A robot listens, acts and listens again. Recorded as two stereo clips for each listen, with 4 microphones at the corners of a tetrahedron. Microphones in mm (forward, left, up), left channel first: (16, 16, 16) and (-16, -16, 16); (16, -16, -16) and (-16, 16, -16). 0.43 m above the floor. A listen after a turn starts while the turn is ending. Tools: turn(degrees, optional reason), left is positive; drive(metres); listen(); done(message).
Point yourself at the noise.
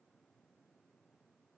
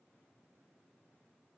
listen()
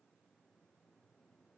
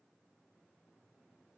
listen()
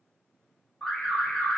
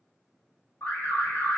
turn(degrees=-20, reason="The alarm: 20° right.")
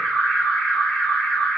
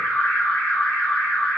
done("Found it: an alarm, straight ahead.")